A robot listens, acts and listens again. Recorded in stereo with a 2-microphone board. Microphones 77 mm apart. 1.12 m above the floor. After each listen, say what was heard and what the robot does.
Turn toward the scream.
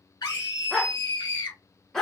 The scream: about 60° left or 120° left. Turn 60° left.
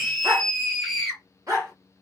Found it: a scream, straight ahead.